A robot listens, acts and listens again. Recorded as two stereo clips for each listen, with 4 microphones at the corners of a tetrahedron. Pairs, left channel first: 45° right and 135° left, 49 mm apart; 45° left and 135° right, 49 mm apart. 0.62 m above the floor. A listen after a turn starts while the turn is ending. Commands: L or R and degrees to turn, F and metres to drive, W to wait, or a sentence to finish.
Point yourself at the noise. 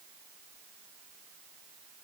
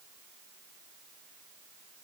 W
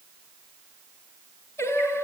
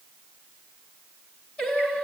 R20
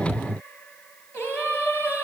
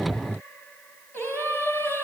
Facing the singing, 2 to 4 m away.